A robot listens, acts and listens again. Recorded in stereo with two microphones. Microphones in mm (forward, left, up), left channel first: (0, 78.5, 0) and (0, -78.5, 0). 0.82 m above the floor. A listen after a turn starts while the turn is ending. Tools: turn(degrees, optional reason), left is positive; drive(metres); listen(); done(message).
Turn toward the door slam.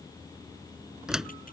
turn(degrees=-30)
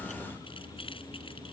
listen()
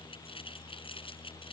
done("I heard a door slam, but can't make it out now. It was about 25° left or 145° right.")